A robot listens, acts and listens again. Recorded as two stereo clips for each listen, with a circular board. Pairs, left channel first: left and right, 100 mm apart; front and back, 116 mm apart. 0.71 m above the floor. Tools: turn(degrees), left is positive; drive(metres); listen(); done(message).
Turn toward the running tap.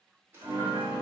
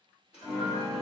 turn(degrees=-25)
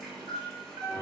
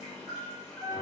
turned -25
listen()
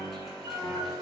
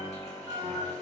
listen()
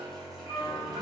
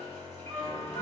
done("I heard a running tap from this way, but can't make it out now.")